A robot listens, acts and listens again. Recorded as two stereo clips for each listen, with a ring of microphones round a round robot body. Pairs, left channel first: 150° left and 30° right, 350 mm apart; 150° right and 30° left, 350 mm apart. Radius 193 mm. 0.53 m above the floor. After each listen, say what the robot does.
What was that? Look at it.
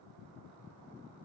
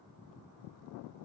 Keep listening.
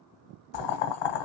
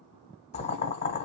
Turn 135° left.
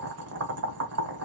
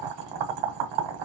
Turn 20° left.
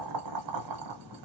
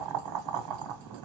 Found it: boiling, straight ahead, 1 to 2 m away.